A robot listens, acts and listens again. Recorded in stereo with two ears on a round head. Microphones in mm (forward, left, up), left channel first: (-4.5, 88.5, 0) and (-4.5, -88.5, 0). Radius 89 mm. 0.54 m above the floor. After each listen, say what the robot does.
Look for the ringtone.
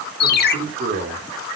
Turn 50° left.
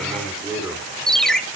Found it: a ringtone, straight ahead, 1 to 2 m away.